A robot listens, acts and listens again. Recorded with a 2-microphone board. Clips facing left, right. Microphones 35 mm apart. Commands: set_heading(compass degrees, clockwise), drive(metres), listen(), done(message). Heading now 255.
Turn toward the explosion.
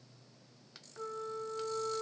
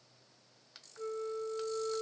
listen()
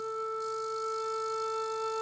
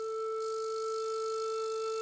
listen()
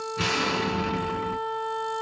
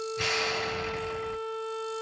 set_heading(185)
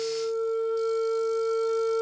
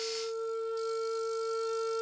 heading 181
listen()
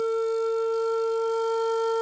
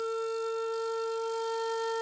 done("I heard an explosion, but can't make it out now. It was about 5° right or 35° left.")